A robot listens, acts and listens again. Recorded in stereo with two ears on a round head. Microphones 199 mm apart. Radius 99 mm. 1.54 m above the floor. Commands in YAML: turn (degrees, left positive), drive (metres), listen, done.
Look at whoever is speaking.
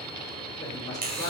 turn: 20
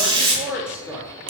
done: "Found it: a woman speaking, straight ahead."